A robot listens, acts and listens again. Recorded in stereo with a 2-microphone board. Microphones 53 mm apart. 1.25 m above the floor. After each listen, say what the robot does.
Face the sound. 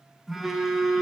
Turn 30° right.
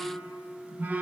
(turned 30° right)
Turn 145° right.
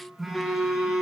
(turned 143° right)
Facing the phone buzzing.